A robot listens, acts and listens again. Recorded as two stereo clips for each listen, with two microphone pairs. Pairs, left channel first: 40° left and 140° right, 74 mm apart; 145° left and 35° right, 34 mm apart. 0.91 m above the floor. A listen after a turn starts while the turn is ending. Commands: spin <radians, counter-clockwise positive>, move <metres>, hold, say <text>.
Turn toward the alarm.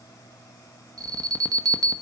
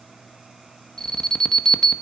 spin -2.53
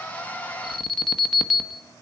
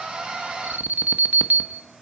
spin -0.87
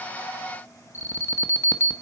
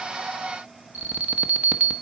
say Facing the alarm.